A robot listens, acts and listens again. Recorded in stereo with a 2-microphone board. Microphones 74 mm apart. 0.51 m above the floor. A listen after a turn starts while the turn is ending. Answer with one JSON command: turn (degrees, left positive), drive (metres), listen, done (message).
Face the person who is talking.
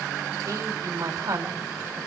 {"turn": -45}
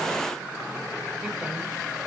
{"listen": true}
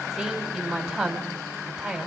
{"done": "Found it: a woman speaking, straight ahead."}